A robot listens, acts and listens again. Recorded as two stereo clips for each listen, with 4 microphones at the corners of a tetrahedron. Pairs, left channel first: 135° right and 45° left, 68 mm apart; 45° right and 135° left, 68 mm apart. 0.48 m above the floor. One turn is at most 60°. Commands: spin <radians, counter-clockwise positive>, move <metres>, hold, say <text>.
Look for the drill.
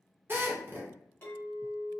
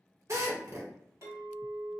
spin 1.05
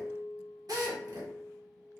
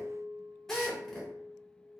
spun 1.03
spin 0.70
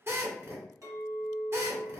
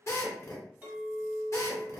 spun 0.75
say Facing the drill.